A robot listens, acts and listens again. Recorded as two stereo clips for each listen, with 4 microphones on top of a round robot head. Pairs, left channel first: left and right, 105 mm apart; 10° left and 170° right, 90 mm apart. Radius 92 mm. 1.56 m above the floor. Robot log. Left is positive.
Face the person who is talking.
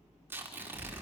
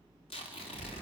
note: The child speaking: 10° left.
cmd yaw +10
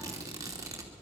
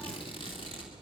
end: Found it: a child speaking, straight ahead.